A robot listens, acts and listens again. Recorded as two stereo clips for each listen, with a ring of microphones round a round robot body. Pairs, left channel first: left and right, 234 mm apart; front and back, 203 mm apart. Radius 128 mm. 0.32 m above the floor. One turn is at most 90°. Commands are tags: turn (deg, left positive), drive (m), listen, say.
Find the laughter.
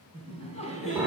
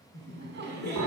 <turn deg="90"/>
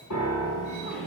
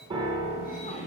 <turn deg="55"/>
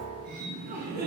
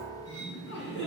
<turn deg="-40"/>
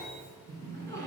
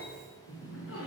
<turn deg="10"/>
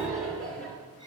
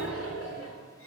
<say>Facing the laughter.</say>